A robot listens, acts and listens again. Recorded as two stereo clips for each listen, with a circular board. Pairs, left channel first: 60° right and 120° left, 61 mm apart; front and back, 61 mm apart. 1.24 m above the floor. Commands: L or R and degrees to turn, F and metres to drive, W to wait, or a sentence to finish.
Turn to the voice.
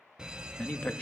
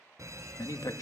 Found it: a man speaking, straight ahead.